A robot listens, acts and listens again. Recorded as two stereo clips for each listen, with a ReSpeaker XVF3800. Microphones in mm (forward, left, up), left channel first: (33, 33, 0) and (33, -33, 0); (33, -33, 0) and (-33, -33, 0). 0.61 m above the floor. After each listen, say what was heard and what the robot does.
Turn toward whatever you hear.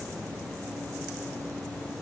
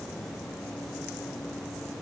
Keep listening.
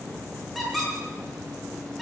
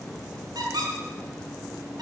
The squeak: straight behind. Turn 180° left.
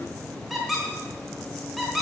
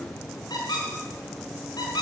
Facing the squeak.